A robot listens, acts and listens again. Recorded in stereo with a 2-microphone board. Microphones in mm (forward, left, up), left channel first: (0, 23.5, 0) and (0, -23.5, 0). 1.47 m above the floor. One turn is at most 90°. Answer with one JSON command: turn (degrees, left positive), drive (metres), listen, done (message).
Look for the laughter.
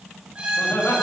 {"turn": 65}
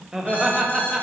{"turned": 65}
{"turn": -15}
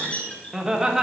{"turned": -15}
{"turn": -15}
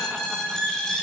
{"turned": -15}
{"listen": true}
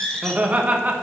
{"turn": -30}
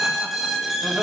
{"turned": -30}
{"listen": true}
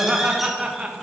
{"turn": -20}
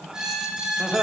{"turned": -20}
{"done": "Found it: laughter, straight ahead, 1 to 2 m away."}